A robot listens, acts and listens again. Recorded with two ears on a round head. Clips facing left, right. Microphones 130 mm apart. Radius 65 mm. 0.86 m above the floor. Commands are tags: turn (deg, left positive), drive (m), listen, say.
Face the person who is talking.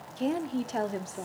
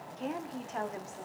<turn deg="40"/>
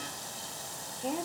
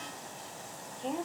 <turn deg="10"/>
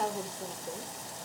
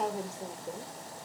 <say>Found it: a woman speaking, straight ahead.</say>